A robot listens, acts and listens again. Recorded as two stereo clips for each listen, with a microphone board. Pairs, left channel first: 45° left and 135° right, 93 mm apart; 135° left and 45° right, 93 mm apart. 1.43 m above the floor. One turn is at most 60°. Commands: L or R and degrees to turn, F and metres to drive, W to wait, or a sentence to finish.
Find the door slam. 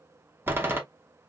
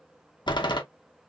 L60
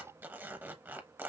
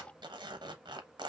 L60
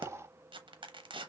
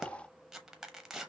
L40
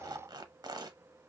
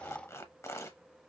I heard a door slam from this way, but can't make it out now.